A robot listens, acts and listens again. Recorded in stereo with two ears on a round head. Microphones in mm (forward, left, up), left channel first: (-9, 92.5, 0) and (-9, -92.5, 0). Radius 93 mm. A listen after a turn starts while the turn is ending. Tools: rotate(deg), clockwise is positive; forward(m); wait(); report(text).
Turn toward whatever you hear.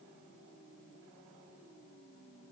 wait()
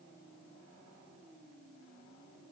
wait()
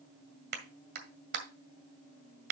rotate(50)
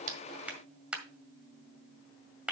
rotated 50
report("Facing the clap.")